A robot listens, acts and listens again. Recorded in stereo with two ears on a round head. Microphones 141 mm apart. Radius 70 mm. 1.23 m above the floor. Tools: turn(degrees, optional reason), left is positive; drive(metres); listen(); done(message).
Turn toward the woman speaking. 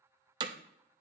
listen()
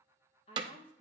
turn(degrees=40, reason="The woman speaking: about 40° left or 140° left.")
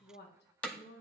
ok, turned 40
turn(degrees=100, reason="So it is at 100° left.")
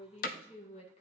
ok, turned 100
turn(degrees=40, reason="The woman speaking is now 40° left.")
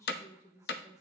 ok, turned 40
turn(degrees=20, reason="The woman speaking is now 20° left.")
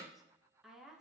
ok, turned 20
done("Facing the woman speaking.")